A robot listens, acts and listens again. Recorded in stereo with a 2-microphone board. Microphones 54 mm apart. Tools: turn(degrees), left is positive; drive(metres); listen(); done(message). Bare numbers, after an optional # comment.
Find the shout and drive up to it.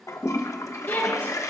# The shout: about 40° left or 140° left.
turn(40)
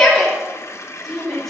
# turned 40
drive(1.0)
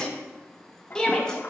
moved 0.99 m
# The shout is now 15° left.
turn(15)
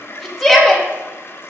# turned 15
drive(1.0)
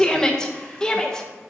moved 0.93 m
# The shout is now 15° left.
turn(15)
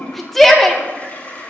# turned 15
drive(1.0)
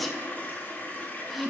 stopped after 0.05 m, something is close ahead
done("I am next to the shout.")